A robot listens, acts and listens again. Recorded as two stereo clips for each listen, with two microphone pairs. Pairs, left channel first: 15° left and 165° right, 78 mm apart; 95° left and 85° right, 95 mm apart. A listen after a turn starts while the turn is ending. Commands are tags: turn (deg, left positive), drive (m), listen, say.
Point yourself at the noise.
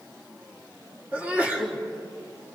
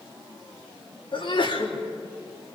<turn deg="125"/>
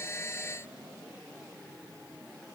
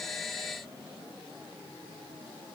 <say>I heard a sneeze from this way, but can't make it out now.</say>